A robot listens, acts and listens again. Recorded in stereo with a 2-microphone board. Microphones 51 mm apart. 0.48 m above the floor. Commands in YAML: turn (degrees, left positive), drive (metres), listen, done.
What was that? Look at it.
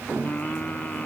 turn: 30
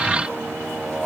done: "Found it: singing, straight ahead."